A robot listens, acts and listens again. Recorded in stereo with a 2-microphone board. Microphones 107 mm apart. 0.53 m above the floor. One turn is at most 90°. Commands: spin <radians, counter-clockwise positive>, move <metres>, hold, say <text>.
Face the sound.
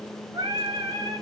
spin -0.61
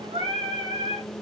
spin -1.57
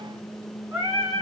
spin -0.61
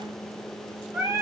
spin -0.44
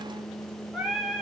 spin -0.17
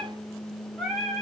say Found it: singing, straight ahead.